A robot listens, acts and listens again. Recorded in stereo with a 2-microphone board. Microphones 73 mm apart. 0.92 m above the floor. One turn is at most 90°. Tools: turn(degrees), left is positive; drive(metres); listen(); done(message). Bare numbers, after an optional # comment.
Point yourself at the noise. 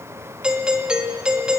turn(-30)
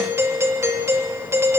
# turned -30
# So it is at 135° right.
turn(-90)
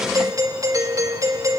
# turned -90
# The doorbell is now 60° right.
turn(-60)
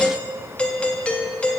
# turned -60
# The doorbell is now 15° left.
turn(15)
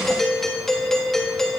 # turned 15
done("Found it: a doorbell, straight ahead, 2 to 4 m away.")